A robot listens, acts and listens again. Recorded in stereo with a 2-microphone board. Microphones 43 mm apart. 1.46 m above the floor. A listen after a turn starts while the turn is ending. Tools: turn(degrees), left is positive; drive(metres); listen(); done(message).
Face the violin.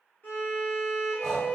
turn(degrees=45)
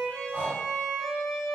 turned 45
done("Found it: a violin, straight ahead, 1 to 2 m away.")